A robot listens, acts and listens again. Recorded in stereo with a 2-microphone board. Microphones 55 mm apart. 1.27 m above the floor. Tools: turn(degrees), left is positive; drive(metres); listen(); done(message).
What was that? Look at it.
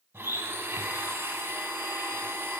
turn(degrees=-40)
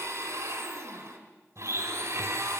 turn(degrees=-95)
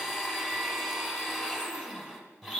turn(degrees=-10)
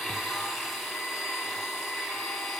done("Facing the blender.")